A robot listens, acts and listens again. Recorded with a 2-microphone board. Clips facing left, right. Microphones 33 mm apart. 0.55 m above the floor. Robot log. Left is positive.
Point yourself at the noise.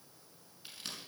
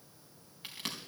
note: The crack: about 75° right or 105° right.
cmd yaw -75
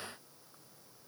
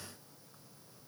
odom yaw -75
cmd idle
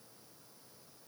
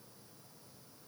end: I heard a crack, but can't make it out now. It was about straight ahead or 30° right.